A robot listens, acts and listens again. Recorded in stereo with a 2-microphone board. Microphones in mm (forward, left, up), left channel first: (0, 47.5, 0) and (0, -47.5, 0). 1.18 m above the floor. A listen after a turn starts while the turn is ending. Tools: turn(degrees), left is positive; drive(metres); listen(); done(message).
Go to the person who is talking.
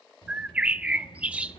turn(degrees=60)
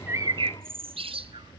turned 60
turn(degrees=60)
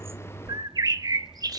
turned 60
drive(metres=1.0)
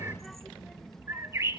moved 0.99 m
drive(metres=1.0)
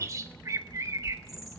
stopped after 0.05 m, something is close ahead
turn(degrees=10)
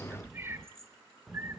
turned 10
done("I am next to the child speaking.")